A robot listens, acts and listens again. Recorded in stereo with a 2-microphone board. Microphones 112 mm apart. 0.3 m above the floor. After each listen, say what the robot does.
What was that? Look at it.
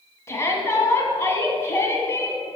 Turn 25° left.
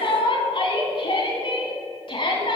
Turn 125° left.
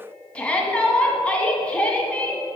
Turn 10° left.
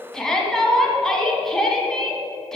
Facing the shout.